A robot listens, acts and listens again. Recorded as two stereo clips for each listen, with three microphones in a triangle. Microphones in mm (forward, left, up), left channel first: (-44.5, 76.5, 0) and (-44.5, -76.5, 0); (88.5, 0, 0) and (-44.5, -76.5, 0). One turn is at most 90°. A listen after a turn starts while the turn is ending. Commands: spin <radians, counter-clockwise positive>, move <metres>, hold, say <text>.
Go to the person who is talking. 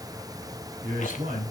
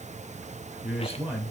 spin -1.13
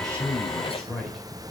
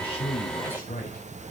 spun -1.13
move 1.0
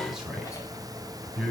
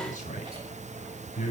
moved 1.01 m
move 1.0
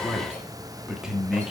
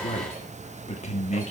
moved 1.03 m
move 1.0
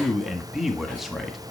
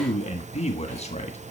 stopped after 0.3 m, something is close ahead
say I am next to the man speaking.